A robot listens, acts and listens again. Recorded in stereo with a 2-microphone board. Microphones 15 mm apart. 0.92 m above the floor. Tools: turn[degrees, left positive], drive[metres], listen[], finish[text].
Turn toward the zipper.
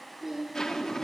Thought: The zipper: about 40° left or 140° left.
Action: turn[40]
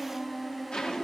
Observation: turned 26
Thought: So it is at 115° left.
Action: turn[115]
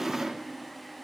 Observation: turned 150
Thought: The zipper is now 35° right.
Action: turn[-35]
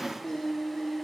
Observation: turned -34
Action: finish[Found it: a zipper, straight ahead.]